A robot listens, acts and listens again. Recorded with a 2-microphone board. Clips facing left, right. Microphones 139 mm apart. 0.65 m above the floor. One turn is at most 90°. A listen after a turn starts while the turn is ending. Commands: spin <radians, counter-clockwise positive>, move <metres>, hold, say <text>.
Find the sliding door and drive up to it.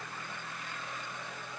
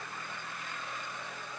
hold
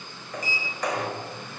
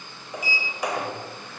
spin -0.52
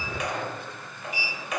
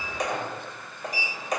spin -1.57
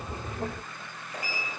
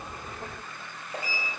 spin -0.52
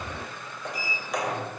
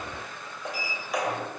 move 1.0
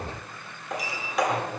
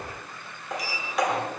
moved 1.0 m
move 1.0
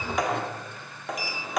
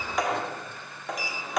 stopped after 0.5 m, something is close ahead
say I am next to the sliding door.